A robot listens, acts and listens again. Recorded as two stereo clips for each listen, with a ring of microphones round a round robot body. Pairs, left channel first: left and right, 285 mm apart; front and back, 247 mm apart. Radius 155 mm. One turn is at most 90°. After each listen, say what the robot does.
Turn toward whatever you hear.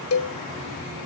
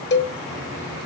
Turn 45° left.
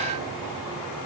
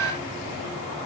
Keep listening.
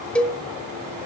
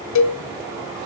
Found it: a cowbell, straight ahead.